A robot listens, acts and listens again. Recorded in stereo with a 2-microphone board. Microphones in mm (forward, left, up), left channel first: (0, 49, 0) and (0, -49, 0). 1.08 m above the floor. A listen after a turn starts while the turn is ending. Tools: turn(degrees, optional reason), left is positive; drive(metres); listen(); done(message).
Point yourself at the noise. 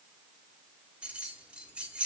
turn(degrees=-30)
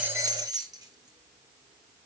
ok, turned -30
turn(degrees=-135, reason="So it is at 135° right.")
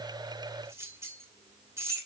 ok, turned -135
turn(degrees=-30, reason="The keys jangling is now 30° right.")
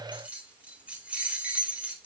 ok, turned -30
turn(degrees=-15, reason="The keys jangling is now 15° right.")
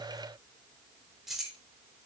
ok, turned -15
done("Found it: keys jangling, straight ahead, 2 to 4 m away.")